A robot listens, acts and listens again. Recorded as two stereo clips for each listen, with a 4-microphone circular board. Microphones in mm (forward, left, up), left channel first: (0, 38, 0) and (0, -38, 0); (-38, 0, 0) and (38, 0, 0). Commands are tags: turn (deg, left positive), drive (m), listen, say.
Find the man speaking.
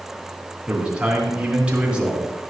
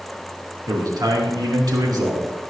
<turn deg="-15"/>
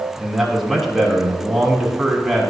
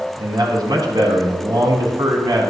<say>Found it: a man speaking, straight ahead, 2 to 4 m away.</say>